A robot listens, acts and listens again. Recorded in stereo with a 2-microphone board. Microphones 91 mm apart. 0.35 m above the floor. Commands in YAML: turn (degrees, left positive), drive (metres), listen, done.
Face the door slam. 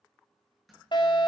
turn: 30
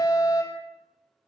listen: true
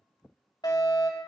done: "I heard a door slam, but can't make it out now. It was about 30° right or 150° left."